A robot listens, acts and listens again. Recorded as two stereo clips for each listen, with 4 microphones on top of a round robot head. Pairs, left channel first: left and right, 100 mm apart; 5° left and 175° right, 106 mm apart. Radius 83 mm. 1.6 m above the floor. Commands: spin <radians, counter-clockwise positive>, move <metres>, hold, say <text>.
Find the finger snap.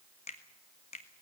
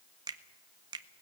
spin 2.44
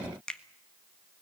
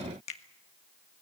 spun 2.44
spin 0.17
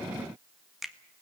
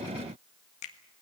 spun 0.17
say Facing the finger snap, 1 to 2 m away.